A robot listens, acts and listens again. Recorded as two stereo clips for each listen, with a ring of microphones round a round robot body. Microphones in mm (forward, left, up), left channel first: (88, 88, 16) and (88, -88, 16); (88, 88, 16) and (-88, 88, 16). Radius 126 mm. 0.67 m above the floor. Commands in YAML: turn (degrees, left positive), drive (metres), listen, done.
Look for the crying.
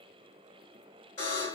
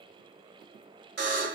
listen: true
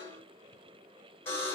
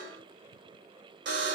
listen: true
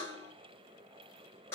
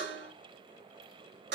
done: "I can't make out crying, only a buzzer."